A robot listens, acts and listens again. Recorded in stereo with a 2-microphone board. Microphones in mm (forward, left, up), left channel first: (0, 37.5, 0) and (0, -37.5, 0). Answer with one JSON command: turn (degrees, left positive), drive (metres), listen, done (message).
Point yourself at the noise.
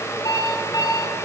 {"turn": 55}
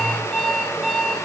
{"done": "Found it: an alarm clock, straight ahead."}